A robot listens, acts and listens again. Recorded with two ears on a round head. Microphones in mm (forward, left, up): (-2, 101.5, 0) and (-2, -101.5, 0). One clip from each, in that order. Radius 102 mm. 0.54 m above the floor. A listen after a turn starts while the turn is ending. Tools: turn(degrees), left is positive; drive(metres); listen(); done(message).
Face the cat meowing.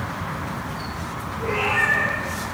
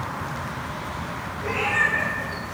turn(degrees=-45)
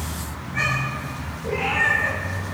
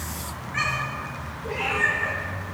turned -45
turn(degrees=-75)
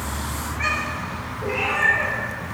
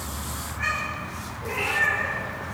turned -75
turn(degrees=10)
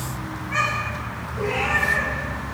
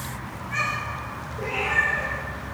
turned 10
done("Facing the cat meowing, over 4 m away.")